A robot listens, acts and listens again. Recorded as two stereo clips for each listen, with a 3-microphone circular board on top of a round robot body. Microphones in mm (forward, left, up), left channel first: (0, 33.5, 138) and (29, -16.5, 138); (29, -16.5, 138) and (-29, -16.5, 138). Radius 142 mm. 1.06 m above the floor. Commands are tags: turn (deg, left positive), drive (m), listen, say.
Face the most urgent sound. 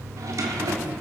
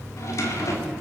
<listen/>
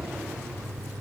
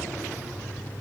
<listen/>
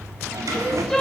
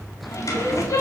<turn deg="40"/>
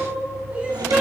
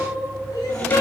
<turn deg="10"/>
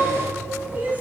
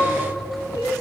<say>Facing the crying, 2 to 4 m away.</say>